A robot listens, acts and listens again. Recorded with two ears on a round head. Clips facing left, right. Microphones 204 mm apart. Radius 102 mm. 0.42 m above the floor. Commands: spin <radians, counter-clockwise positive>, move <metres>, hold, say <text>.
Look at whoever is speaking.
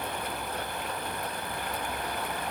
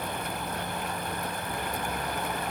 hold
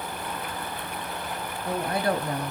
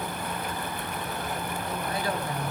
spin 0.87
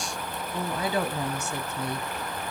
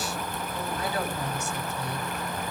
spin 1.31
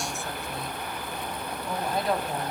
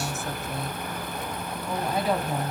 say Facing the woman speaking, 2 to 4 m away.